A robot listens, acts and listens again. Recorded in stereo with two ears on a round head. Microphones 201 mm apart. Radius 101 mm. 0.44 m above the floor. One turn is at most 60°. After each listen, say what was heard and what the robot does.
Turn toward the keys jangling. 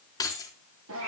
The keys jangling: about 15° left or 165° left. Turn 15° left.
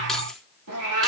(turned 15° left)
Keep listening.
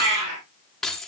Found it: keys jangling, straight ahead.